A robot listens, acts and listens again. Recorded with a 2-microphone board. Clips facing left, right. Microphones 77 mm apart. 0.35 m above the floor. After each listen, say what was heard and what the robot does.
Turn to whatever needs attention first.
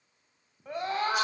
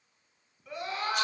The scream: about 45° left or 135° left. Turn 45° left.
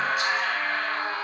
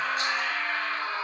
So it is at 85° left. Turn 85° left.
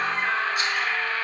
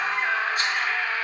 The scream is now 15° right. Turn 15° right.
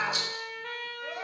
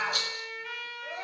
Found it: a scream, straight ahead, 1 to 2 m away.